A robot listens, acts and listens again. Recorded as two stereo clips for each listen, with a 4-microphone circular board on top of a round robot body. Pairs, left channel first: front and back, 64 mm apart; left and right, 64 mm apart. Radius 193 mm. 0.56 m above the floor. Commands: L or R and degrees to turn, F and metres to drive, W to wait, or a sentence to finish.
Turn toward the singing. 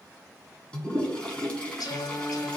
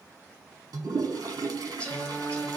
L15
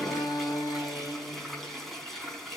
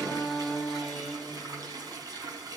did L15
Facing the singing.